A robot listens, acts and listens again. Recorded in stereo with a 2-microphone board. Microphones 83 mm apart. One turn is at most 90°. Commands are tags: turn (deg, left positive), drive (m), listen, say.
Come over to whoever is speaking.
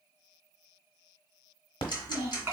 <turn deg="-30"/>
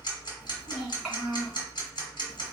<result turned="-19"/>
<turn deg="-15"/>
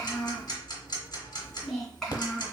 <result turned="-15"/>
<drive m="1.0"/>
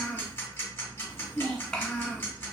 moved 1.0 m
<drive m="1.0"/>
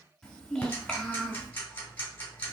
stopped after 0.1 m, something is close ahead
<say>Arrived at the child speaking, straight ahead.</say>